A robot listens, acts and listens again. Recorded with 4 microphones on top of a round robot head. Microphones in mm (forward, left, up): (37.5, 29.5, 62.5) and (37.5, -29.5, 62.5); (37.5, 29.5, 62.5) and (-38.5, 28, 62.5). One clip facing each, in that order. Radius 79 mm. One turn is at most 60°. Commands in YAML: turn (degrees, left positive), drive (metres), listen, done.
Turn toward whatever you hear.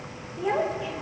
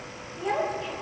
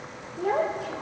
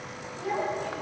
done: "Facing the child speaking."